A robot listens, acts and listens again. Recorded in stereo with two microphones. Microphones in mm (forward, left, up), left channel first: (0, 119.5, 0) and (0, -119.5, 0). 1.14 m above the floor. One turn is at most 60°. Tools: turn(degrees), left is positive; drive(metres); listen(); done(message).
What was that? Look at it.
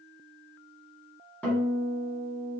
turn(degrees=30)
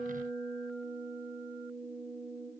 turn(degrees=-25)
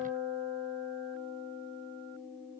turn(degrees=15)
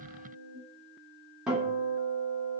done("Facing the guitar.")